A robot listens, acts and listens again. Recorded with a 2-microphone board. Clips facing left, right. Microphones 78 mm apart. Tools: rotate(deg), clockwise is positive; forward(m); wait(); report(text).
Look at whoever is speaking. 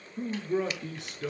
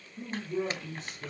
rotate(-90)
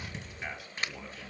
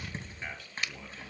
report("Found it: a man speaking, straight ahead.")